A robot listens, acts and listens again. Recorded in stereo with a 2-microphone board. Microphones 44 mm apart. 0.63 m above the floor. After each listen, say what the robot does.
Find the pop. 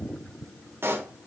Turn 65° right.
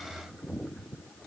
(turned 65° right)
Keep listening.
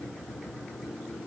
I heard a pop, but can't make it out now. It was about straight ahead or 50° right.